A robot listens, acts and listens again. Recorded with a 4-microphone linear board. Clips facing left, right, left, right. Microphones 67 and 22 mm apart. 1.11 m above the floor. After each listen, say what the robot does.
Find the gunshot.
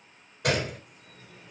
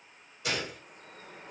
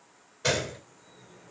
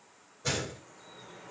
Turn 55° left.
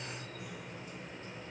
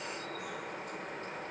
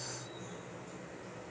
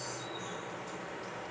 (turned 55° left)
Keep listening.
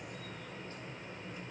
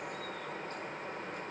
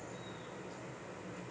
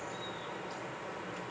I heard a gunshot, but can't make it out now. It was about straight ahead or 70° left.